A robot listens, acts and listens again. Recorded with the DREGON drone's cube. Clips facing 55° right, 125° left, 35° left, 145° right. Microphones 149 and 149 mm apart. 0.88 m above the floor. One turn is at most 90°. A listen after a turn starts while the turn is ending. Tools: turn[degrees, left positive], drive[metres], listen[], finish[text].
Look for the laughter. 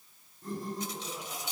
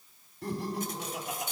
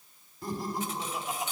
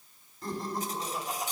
Thought: The laughter: 120° left.
Action: turn[90]
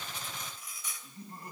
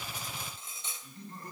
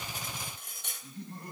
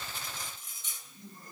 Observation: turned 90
Thought: The laughter is now 25° left.
Action: turn[25]
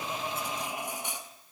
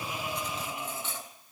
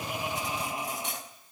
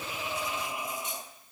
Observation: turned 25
Thought: The laughter is now 15° right.
Action: turn[-15]
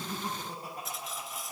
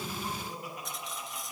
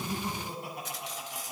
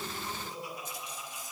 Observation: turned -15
Action: finish[Facing the laughter, over 4 m away.]